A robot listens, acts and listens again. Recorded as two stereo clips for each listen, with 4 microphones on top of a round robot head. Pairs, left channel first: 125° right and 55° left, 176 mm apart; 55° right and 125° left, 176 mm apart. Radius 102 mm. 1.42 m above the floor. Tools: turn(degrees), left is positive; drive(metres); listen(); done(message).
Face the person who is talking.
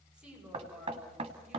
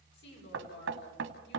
turn(degrees=-30)
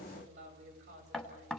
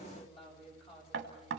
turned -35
done("Facing the woman speaking, over 4 m away.")